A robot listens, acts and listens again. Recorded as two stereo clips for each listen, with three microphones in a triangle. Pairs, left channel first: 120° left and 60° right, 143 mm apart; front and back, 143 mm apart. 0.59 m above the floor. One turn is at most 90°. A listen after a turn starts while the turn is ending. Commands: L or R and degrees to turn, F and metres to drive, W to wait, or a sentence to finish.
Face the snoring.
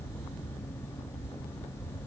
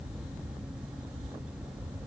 W
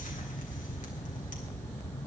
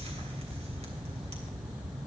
W
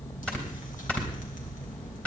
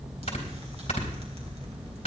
L40
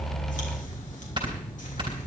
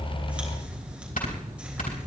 Found it: snoring, straight ahead.